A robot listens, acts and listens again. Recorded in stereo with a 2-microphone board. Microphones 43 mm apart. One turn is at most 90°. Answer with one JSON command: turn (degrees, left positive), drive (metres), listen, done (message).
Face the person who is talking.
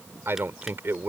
{"turn": -60}
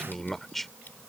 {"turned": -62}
{"done": "Facing the man speaking."}